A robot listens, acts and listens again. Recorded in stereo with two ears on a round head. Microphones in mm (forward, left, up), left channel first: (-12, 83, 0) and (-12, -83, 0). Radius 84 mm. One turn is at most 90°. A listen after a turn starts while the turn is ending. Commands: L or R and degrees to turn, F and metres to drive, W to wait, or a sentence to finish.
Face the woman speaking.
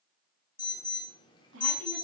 R90
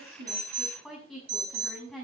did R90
Found it: a woman speaking, straight ahead.